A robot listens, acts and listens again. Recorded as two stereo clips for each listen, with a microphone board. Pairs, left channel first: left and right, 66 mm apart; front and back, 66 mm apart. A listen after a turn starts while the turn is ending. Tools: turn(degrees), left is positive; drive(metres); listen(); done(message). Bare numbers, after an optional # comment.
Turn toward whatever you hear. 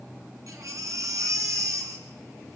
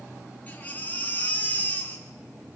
# The baby crying: 65° right.
turn(-65)
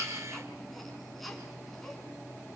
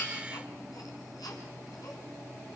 listen()
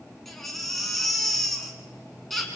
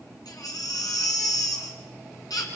done("Found it: a baby crying, straight ahead, 2 to 4 m away.")